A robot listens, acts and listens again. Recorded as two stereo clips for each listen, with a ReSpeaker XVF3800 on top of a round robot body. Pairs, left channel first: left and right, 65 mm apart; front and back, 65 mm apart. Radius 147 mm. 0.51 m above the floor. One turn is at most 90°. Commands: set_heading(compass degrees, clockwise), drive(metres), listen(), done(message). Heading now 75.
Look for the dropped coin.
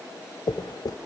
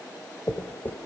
set_heading(10)
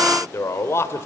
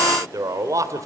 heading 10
done("Facing where the dropped coin came from. I can't hear it now.")